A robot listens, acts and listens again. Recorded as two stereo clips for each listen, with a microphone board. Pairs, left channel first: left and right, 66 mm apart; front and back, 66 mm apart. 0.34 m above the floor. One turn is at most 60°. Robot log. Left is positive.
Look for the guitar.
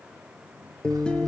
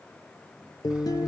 note: The guitar: 15° left.
cmd yaw +15
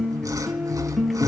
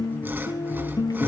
end: Facing the guitar, 1 to 2 m away.